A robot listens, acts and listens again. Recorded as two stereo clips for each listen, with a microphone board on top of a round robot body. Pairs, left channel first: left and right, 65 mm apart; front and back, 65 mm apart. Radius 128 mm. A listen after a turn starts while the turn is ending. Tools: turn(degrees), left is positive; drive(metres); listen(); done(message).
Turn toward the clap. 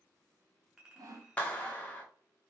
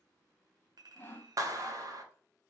turn(degrees=160)
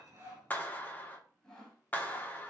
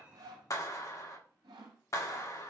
turn(degrees=30)
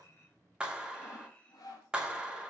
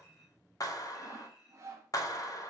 turn(degrees=-15)
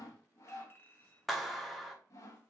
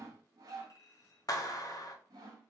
done("Found it: a clap, straight ahead.")